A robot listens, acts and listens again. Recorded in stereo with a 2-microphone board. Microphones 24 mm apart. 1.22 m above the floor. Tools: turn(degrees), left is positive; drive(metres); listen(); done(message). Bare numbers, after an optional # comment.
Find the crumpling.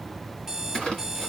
# The crumpling: about 40° left or 140° left.
turn(40)
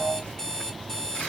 listen()
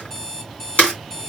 # So it is at 95° left.
turn(95)
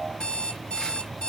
listen()
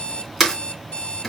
done("Found it: crumpling, straight ahead.")